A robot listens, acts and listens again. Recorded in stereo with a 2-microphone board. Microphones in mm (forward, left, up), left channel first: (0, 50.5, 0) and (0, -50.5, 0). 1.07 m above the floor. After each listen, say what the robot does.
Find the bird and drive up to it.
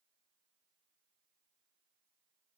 Keep listening.
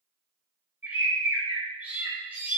Turn 15° right.
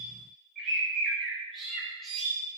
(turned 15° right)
Drive 1.0 m forward.
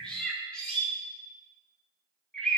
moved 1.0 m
Turn 10° left.
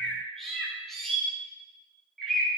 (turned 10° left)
Drive 1.0 m forward.
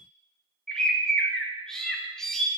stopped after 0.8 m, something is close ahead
Arrived at the bird, straight ahead.